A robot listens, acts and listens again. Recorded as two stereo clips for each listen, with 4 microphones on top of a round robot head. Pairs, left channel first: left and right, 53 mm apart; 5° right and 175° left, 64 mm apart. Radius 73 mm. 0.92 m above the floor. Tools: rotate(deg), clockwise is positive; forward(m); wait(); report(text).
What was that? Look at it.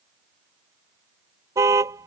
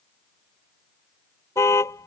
rotate(55)
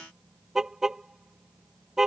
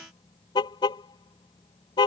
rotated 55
rotate(10)
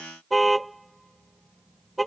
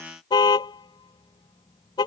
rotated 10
report("Facing the car horn.")